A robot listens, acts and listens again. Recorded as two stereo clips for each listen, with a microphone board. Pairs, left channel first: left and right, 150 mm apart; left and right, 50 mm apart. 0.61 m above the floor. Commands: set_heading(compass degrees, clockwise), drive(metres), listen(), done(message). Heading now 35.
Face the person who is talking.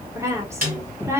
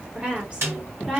set_heading(55)
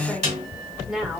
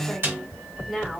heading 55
done("Facing the woman speaking, 1 to 2 m away.")